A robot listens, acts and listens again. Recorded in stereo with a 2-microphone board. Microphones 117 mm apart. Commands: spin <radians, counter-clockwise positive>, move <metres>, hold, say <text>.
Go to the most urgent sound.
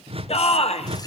spin 1.13
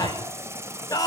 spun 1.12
spin 0.61
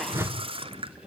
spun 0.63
hold
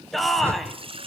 move 1.0
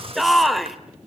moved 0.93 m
move 1.0
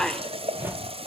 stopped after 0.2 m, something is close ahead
say Arrived at the shout, straight ahead.